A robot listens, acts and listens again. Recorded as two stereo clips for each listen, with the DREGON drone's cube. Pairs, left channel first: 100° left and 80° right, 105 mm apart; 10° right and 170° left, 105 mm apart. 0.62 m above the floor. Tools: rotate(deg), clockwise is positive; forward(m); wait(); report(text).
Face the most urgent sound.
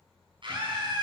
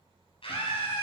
rotate(40)
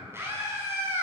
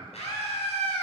rotate(15)
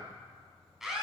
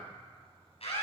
report("Facing the scream, over 4 m away.")